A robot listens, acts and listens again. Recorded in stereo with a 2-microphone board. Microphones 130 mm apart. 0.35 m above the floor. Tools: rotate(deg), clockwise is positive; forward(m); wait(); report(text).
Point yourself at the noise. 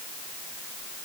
wait()
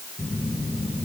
rotate(-40)
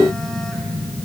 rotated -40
report("Facing the phone buzzing.")